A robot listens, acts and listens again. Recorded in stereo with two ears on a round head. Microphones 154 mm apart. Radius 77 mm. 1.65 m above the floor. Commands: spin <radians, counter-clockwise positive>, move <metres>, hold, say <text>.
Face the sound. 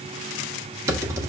spin -0.26
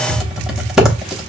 say Found it: typing on a keyboard, straight ahead, under 1 m away.